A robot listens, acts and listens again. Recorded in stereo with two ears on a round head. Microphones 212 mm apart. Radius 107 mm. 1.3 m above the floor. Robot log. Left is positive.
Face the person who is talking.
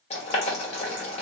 cmd idle
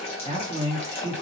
note: The man speaking: about 15° right or 165° right.
cmd yaw -15
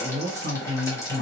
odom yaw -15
note: So it is at 150° right.
cmd yaw -150
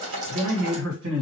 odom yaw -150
note: The man speaking is now 60° right.
cmd yaw -60
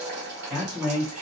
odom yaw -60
end: Found it: a man speaking, straight ahead.